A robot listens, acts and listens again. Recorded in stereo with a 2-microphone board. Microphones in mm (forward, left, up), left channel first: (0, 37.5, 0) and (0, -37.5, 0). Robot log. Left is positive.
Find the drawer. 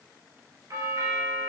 cmd idle
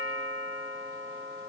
cmd idle
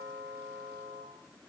end: I can't make out a drawer, only a doorbell.